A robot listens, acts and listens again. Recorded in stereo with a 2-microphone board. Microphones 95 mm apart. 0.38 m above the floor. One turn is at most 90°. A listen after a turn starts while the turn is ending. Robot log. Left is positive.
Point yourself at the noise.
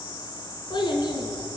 note: The child speaking: about 50° left or 130° left.
cmd yaw +50
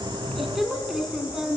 end: Facing the child speaking, 2 to 4 m away.